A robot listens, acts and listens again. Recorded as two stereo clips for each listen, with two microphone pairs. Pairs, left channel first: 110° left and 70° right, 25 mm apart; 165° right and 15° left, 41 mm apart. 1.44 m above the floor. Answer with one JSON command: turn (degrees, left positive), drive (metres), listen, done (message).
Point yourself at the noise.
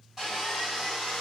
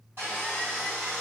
{"done": "Facing the sawing."}